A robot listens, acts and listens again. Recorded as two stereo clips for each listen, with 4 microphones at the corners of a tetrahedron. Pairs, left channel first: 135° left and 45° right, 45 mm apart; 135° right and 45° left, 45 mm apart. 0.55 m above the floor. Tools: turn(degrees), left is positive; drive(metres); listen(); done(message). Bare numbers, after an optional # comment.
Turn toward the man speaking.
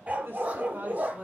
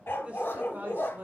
done("Facing the man speaking, 1 to 2 m away.")